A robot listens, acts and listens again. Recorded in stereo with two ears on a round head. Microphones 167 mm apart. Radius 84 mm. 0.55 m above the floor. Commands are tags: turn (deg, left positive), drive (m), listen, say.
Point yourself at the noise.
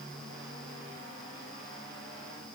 <listen/>
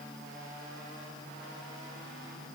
<listen/>
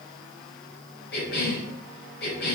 <turn deg="60"/>
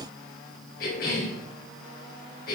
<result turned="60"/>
<turn deg="55"/>
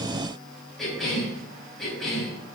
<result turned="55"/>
<say>Facing the cough, over 4 m away.</say>